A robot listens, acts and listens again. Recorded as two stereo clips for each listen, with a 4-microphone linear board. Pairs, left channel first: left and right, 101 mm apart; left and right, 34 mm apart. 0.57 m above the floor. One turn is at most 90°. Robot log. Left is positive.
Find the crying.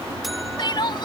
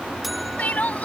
note: The crying: about 50° left or 130° left.
cmd yaw +50
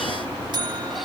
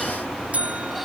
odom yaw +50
cmd idle
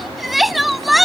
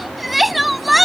end: Facing the crying.